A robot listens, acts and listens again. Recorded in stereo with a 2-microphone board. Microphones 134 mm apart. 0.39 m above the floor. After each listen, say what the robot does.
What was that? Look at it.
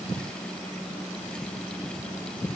Keep listening.
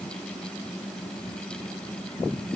Keep listening.
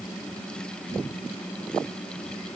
I can't make out anything.